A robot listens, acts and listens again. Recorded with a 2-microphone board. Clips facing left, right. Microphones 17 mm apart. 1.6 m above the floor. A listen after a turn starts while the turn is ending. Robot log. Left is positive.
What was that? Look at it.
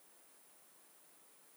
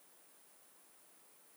cmd idle
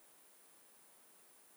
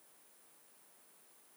cmd idle
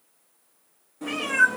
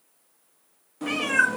note: The cat meowing: about 35° right or 145° right.
cmd yaw -35
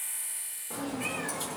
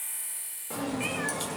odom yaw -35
note: So it is at 135° right.
cmd yaw -135
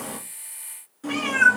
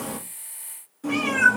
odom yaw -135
note: The cat meowing is now 20° left.
cmd yaw +20
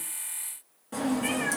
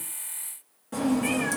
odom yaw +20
end: Facing the cat meowing, 1 to 2 m away.